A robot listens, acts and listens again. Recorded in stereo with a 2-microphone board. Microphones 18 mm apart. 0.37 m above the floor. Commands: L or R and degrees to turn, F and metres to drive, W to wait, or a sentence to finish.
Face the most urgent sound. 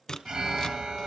R60
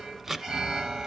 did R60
R55
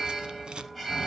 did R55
R15
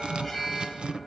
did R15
Facing the alarm, 2 to 4 m away.